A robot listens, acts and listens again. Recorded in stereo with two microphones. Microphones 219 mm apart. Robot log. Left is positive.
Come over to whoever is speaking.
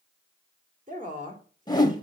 note: The woman speaking: about 35° right or 145° right.
cmd yaw -35
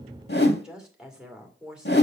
cmd fwd 1.0
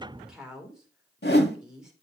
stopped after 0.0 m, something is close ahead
end: Blocked. The woman speaking is further on, straight ahead.